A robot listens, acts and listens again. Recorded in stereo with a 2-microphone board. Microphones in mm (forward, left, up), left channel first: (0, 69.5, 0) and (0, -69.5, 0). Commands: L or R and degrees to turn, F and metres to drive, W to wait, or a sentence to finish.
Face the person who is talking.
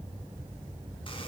W
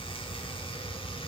W
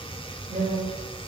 R65
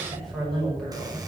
Facing the woman speaking.